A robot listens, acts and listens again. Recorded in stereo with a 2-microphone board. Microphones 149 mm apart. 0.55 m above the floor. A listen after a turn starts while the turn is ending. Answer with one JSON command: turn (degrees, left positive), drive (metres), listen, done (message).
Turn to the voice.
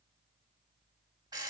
{"listen": true}
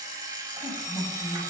{"turn": 30}
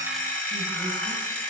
{"listen": true}
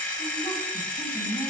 {"turn": 145}
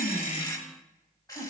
{"done": "Facing the woman speaking."}